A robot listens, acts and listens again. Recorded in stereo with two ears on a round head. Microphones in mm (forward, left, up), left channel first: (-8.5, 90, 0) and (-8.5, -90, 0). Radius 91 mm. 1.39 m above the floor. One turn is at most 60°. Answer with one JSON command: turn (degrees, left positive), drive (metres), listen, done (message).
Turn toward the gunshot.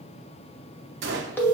{"turn": -60}
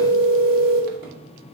{"listen": true}
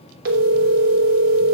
{"done": "I heard a gunshot, but can't make it out now. It was about straight ahead or 60° right."}